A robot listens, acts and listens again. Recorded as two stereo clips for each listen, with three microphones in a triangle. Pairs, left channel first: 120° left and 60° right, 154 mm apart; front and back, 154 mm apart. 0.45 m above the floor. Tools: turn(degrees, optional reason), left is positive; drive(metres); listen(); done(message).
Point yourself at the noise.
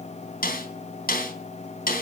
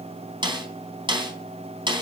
turn(degrees=120, reason="The snare drum: 120° left.")
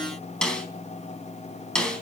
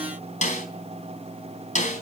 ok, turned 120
turn(degrees=35, reason="The snare drum is now 35° left.")
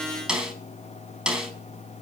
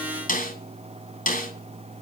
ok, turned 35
turn(degrees=25, reason="The snare drum is now 25° left.")
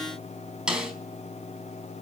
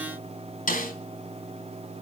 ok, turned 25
turn(degrees=25, reason="The snare drum is now 25° left.")
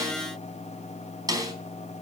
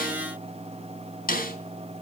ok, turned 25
done("Facing the snare drum.")